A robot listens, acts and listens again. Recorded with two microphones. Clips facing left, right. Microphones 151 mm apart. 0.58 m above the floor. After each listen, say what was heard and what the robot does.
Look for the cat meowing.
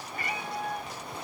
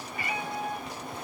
The cat meowing: about 45° left or 135° left. Turn 45° left.
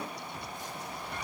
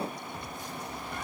Keep listening.
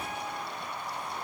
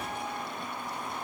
Keep listening.
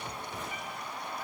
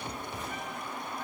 I heard a cat meowing, but can't make it out now. It was about straight ahead or 90° left.